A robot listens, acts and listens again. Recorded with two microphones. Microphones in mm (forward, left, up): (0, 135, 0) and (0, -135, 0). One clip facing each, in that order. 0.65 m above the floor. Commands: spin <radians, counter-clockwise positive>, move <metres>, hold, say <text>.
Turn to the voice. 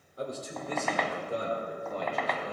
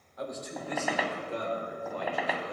spin 0.79
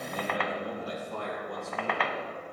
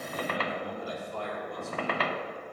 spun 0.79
spin 1.31
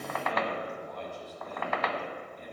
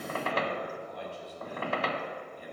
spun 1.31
spin -0.17
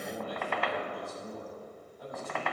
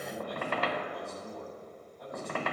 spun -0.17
say Facing the man speaking.